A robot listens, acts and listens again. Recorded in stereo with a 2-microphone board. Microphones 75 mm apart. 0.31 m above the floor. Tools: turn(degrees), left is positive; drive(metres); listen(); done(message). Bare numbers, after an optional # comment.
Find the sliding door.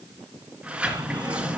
turn(-30)
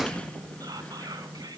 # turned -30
# So it is at 15° left.
turn(15)
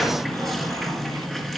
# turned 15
done("Found it: a sliding door, straight ahead, 2 to 4 m away.")